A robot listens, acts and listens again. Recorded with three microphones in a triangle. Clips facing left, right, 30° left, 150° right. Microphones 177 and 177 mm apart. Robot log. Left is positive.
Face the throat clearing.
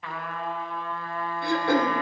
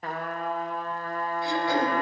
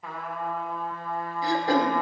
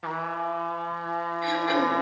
note: The throat clearing: 75° left.
cmd yaw +75
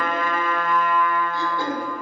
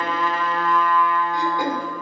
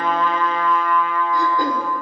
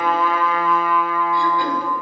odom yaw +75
note: The throat clearing is now 15° right.
cmd yaw -15
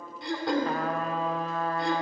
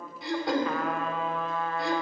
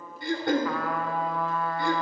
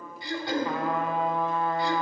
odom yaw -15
end: Facing the throat clearing.